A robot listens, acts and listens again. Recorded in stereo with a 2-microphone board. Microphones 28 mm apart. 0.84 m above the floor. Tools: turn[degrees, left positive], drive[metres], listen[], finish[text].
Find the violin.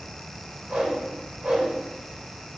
Action: listen[]
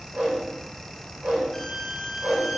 Action: turn[30]
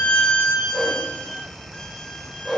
Thought: So it is at 140° left.
Action: turn[140]
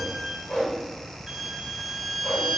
Thought: The violin is now 10° right.
Action: turn[-10]
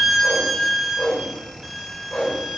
Action: finish[Facing the violin.]